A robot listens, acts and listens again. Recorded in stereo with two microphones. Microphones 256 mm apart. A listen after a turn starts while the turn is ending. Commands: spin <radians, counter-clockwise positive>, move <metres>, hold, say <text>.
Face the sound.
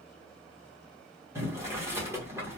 spin -0.52
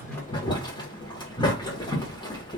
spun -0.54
spin 0.35
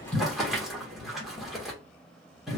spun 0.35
say Found it: boiling, straight ahead.